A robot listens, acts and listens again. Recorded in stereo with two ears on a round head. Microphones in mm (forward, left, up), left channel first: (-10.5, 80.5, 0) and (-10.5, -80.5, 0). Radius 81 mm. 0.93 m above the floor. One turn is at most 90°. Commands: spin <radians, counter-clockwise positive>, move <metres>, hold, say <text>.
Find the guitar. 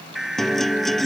spin 0.52
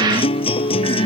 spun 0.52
spin 1.57
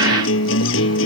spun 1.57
spin 1.40
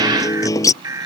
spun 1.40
spin 0.35
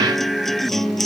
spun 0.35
say Found it: a guitar, straight ahead.